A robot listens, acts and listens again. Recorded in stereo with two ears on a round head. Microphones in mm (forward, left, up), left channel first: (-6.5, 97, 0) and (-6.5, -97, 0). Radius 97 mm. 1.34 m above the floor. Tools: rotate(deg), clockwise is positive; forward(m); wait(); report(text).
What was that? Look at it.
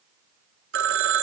rotate(60)
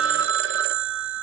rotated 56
rotate(60)
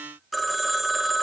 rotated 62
report("Found it: a phone ringing, straight ahead.")